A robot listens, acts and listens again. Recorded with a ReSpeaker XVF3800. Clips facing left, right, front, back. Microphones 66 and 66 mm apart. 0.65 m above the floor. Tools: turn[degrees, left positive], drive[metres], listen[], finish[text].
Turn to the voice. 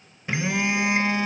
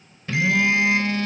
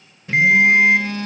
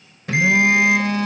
Action: listen[]
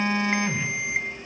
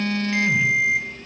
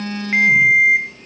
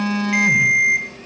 Action: listen[]
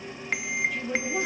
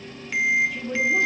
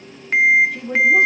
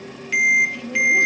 Action: finish[Facing the woman speaking, over 4 m away.]